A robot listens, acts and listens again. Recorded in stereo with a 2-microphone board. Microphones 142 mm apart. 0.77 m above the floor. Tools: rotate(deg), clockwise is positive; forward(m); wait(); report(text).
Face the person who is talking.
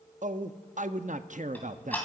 rotate(60)
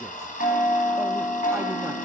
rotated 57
wait()
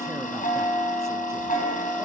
wait()
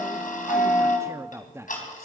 rotate(20)
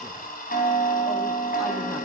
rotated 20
wait()
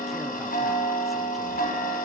wait()
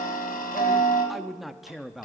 report("Facing the man speaking.")